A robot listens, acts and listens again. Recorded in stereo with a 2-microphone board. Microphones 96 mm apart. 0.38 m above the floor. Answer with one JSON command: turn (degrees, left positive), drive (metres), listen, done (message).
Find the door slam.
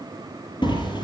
{"turn": 55}
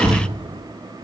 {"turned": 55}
{"done": "Facing the door slam."}